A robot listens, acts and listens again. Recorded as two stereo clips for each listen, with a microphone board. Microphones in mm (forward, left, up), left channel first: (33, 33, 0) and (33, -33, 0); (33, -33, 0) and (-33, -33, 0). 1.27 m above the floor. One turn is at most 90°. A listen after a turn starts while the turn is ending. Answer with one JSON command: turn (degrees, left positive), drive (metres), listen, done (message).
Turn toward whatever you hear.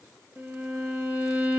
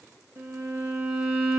{"turn": -90}
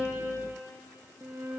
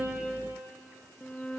{"turn": -75}
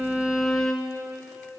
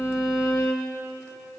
{"turn": 10}
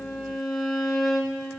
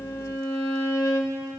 {"done": "Found it: a violin, straight ahead."}